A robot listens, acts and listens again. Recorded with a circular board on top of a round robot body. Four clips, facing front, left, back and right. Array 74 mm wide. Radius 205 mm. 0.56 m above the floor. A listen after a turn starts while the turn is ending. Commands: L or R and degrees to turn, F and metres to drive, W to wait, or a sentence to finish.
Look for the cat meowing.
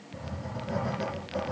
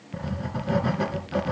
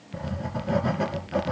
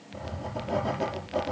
W
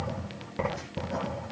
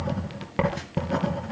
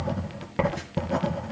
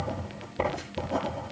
W
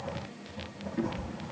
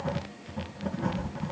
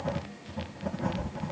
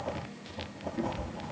R10
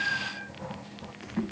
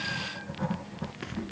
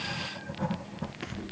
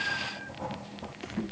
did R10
W
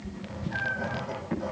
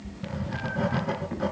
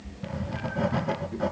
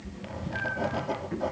L10
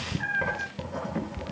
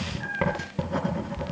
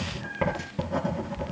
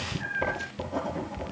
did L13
Found it: a cat meowing, straight ahead, 1 to 2 m away.